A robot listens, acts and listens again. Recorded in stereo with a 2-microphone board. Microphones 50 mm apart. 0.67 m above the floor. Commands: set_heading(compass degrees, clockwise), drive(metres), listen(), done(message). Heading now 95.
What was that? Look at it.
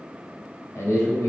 set_heading(30)
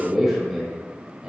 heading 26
set_heading(41)
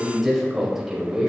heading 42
set_heading(52)
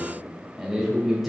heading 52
done("Facing the man speaking.")